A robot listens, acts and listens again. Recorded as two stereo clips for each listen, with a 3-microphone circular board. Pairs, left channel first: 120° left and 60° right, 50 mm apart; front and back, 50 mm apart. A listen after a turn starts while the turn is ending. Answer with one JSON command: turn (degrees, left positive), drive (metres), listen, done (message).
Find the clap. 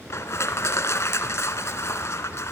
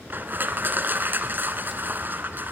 {"listen": true}
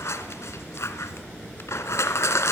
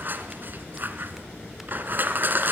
{"listen": true}
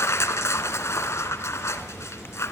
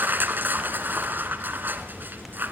{"done": "I can't make out a clap to turn to."}